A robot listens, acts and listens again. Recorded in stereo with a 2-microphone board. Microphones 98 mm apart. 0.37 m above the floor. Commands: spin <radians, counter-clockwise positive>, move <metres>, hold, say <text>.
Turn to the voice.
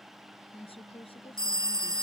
spin 1.31
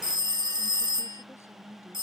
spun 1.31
hold
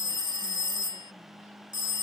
hold
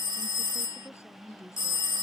spin 0.52
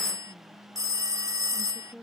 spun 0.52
spin 0.17
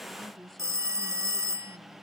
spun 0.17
say Facing the woman speaking.